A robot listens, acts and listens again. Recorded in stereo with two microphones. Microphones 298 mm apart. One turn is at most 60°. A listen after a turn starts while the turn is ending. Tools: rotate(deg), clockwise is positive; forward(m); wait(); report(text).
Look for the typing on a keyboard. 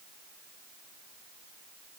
wait()
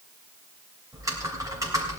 rotate(30)
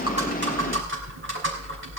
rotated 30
rotate(60)
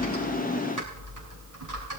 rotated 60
rotate(60)
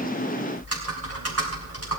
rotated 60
rotate(55)
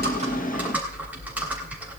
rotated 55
report("Found it: typing on a keyboard, straight ahead.")